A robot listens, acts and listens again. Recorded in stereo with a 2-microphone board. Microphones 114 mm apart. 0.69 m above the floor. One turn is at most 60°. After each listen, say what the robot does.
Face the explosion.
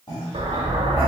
Turn 60° right.
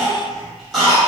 Keep listening.
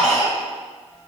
I heard an explosion, but can't make it out now. It was about 5° right or 55° right.